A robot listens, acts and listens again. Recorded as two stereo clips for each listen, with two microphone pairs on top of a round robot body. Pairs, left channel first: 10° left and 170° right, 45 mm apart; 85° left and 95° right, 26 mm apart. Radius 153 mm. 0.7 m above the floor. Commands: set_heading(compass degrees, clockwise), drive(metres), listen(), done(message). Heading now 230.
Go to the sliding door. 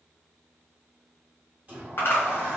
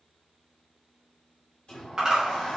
set_heading(90)
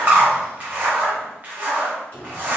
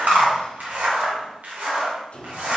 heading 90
set_heading(40)
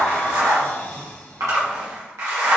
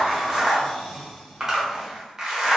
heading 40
drive(1.0)
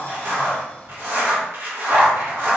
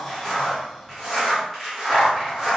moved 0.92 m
drive(1.0)
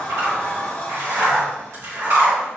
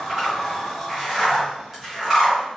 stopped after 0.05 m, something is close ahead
done("Arrived at the sliding door, straight ahead.")